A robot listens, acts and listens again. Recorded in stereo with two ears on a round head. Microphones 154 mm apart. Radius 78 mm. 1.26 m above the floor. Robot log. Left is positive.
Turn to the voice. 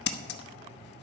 cmd idle
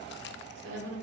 cmd yaw -90
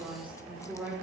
end: Facing the woman speaking.